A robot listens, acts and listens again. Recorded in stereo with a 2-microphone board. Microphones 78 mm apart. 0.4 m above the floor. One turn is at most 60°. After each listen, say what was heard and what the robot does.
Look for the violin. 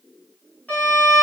The violin: about 15° left or 165° left. Turn 15° left.
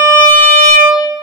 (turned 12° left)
So it is at 155° left. Turn 60° left.
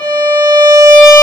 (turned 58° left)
The violin is now 95° left. Turn 60° left.
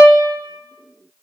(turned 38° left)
The violin is now 55° left. Turn 55° left.
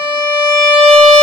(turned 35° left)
The violin is now 20° left. Turn 20° left.
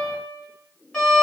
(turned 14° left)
The violin is now 10° left. Turn 10° left.
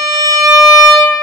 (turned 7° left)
Facing the violin.